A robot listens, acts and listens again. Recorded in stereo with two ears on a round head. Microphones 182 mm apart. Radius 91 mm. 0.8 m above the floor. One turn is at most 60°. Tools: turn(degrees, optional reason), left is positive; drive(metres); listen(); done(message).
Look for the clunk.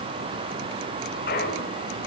turn(degrees=50, reason="The clunk: about 50° left or 130° left.")
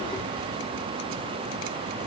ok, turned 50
listen()
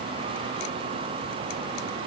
done("I heard a clunk, but can't make it out now. It was about straight ahead or 80° left.")